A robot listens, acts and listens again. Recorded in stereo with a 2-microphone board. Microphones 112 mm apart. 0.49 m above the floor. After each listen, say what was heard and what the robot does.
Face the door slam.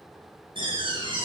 The door slam: about 45° right or 135° right. Turn 45° right.
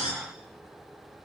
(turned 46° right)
So it is at 90° right. Turn 90° right.
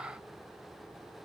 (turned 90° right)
I heard a door slam from this way, but can't make it out now.